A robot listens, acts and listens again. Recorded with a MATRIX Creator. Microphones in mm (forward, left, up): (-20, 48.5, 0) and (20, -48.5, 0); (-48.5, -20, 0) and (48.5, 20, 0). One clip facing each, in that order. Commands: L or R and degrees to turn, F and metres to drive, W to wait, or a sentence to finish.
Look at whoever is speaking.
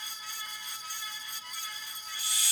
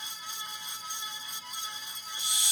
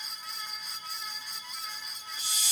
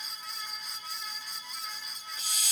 W
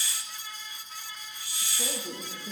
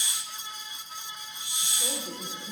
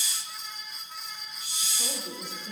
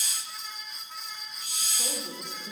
L90
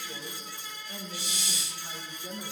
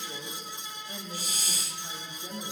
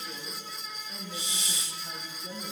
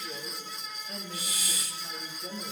R10
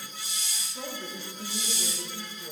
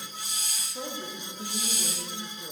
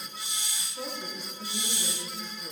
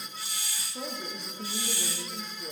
Found it: a woman speaking, straight ahead.